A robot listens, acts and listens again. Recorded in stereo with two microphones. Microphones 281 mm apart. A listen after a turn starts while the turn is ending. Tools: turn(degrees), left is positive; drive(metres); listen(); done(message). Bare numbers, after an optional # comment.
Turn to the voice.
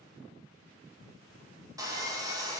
listen()
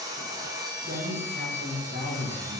# The man speaking: about 40° right or 140° right.
turn(-40)
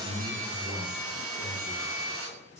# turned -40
done("Found it: a man speaking, straight ahead, 1 to 2 m away.")